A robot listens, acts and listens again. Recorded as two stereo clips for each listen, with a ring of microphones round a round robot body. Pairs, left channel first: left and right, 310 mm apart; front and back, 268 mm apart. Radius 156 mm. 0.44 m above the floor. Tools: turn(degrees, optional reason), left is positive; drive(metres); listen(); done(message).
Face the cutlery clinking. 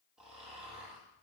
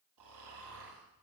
listen()
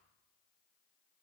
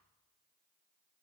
listen()
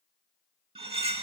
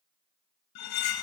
turn(degrees=-20, reason="The cutlery clinking: 20° right.")
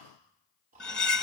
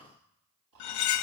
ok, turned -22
done("Found it: cutlery clinking, straight ahead, under 1 m away.")